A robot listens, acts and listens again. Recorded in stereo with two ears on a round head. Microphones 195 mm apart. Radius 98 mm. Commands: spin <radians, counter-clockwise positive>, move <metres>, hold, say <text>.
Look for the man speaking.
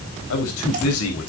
spin 1.57
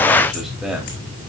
say Facing the man speaking.